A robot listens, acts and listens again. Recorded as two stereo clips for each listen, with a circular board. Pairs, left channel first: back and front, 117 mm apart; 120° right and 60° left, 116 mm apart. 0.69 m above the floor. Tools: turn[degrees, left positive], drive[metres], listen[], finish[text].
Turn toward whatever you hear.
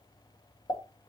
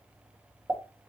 Thought: The pop: 130° left.
Action: turn[130]
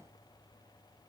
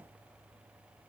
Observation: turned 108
Thought: Nothing new. It was at 20° left.
Action: turn[20]
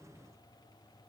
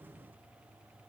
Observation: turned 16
Action: finish[I heard a pop from this way, but can't make it out now.]